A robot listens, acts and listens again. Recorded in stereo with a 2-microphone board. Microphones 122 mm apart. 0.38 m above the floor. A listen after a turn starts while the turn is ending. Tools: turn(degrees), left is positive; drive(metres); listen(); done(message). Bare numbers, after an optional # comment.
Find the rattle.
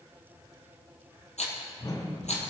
turn(90)
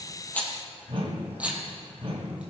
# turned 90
# So it is at 10° right.
turn(-10)
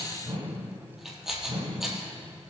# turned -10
done("Found it: a rattle, straight ahead.")